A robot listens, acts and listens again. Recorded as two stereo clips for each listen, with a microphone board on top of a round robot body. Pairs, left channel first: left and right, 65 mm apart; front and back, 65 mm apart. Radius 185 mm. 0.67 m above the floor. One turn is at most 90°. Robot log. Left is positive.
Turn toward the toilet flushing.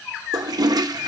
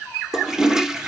note: The toilet flushing: 95° right.
cmd yaw -90
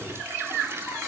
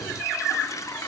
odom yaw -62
note: Nothing new. It was at 35° right.
cmd yaw -35
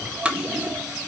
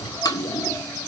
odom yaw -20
note: The toilet flushing is now 15° right.
cmd yaw -15
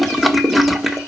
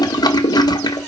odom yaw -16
end: Facing the toilet flushing.